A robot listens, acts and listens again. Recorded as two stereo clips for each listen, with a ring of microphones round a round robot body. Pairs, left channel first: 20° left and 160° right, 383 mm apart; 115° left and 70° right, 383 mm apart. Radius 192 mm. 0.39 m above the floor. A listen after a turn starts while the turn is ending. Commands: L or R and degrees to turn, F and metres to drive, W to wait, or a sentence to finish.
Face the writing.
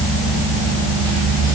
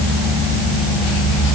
W
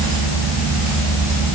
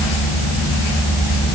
W
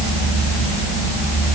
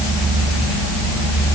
I can't make out writing to turn to.